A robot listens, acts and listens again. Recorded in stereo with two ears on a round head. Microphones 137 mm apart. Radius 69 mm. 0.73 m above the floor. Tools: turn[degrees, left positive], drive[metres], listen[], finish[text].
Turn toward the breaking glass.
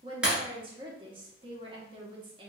Action: turn[-30]
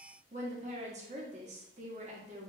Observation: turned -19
Action: listen[]
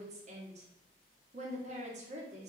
Action: finish[I heard breaking glass, but can't make it out now. It was about 15° left or 155° right.]